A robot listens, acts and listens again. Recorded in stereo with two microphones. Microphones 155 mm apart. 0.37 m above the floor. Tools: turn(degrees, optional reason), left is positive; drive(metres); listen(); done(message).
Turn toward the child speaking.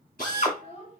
turn(degrees=50, reason="The child speaking: about 50° left or 130° left.")
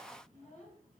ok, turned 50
turn(degrees=55, reason="So it is at 55° left.")
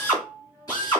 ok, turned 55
listen()
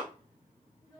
turn(degrees=25, reason="The child speaking is now 25° left.")
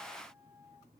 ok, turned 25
listen()
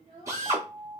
turn(degrees=-25, reason="The child speaking is now 25° right.")
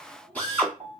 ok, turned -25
done("Found it: a child speaking, straight ahead, 2 to 4 m away.")